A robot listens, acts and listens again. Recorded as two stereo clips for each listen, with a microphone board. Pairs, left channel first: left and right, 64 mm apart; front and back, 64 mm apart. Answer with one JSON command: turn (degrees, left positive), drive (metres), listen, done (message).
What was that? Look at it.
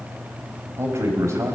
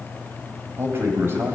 {"turn": -130}
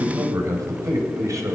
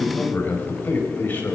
{"turn": -60}
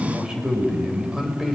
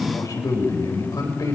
{"turn": -10}
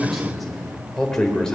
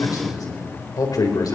{"turn": 10}
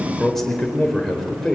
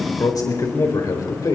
{"done": "Found it: a man speaking, straight ahead."}